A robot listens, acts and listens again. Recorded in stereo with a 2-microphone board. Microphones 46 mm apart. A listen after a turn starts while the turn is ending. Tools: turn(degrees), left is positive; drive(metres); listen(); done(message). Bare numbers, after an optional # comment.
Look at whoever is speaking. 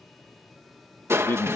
# The man speaking: about 50° left or 130° left.
turn(50)
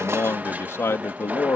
# So it is at 75° left.
turn(75)
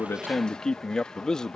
# The man speaking is now 15° left.
turn(15)
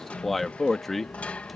done("Found it: a man speaking, straight ahead.")